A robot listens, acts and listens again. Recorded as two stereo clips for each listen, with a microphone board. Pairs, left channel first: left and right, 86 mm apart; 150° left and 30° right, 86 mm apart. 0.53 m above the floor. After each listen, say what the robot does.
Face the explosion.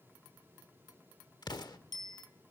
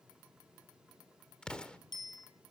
Turn 75° left.
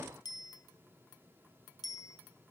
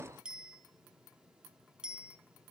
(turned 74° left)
Facing where the explosion came from. I can't hear it now.